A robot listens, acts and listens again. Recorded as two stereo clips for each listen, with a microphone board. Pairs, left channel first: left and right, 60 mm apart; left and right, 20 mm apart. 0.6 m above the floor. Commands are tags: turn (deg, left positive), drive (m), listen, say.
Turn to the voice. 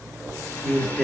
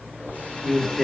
<turn deg="30"/>
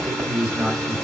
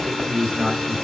<turn deg="-20"/>
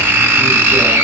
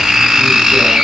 <listen/>
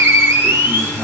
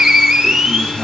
<listen/>
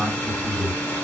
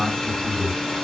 <say>Facing the man speaking, 1 to 2 m away.</say>